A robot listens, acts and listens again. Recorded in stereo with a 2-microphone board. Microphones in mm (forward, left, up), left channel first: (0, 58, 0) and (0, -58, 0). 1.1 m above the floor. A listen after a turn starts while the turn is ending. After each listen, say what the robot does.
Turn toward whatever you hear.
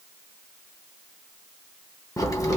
Turn 30° left.
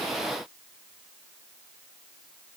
Keep listening.
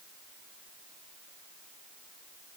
I heard a crack, but can't make it out now. It was about straight ahead or 120° left.